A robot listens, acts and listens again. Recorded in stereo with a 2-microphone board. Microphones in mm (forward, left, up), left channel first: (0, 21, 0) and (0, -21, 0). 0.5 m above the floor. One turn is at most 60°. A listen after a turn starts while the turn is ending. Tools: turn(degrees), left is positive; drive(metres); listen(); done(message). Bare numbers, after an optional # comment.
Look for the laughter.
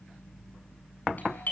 listen()
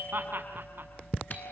# The laughter: about 60° right or 120° right.
turn(-60)
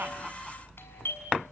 listen()
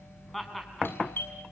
done("Found it: laughter, straight ahead.")